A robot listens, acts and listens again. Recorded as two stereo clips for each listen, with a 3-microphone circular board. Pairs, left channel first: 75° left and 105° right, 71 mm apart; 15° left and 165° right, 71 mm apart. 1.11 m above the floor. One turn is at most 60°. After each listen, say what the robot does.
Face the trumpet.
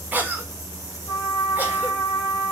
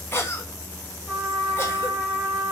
Turn 60° left.
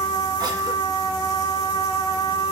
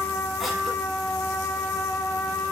Turn 60° left.
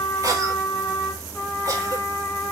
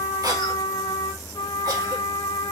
Turn 10° left.
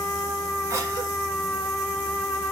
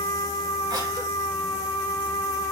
Found it: a trumpet, straight ahead, 1 to 2 m away.